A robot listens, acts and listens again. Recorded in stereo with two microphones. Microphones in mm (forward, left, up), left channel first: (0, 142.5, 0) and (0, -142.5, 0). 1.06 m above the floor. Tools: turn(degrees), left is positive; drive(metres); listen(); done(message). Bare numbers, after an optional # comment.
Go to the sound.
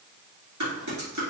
turn(-90)
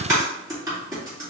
# So it is at 10° right.
turn(-10)
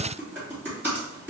drive(1.0)
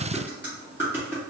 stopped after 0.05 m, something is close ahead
done("Something is in my way. I am facing the typing on a keyboard but have not reached it.")